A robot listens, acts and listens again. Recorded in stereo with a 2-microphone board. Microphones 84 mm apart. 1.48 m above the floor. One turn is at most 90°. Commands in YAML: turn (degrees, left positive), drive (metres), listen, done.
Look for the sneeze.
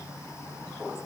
listen: true
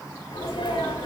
turn: 90
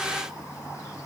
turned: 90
done: "I heard a sneeze from this way, but can't make it out now."